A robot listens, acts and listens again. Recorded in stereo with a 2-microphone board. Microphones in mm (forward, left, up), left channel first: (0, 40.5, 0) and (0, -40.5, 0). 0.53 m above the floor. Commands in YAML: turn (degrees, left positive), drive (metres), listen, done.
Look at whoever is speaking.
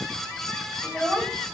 turn: 30
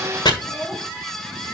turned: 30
turn: 135
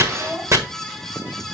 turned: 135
turn: -10
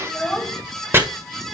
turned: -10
done: "Found it: a child speaking, straight ahead."